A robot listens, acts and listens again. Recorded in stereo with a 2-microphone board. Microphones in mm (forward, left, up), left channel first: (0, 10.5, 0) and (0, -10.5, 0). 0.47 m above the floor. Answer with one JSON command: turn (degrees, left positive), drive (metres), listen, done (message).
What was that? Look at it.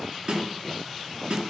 {"turn": -45}
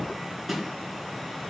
{"done": "Facing the snare drum, 2 to 4 m away."}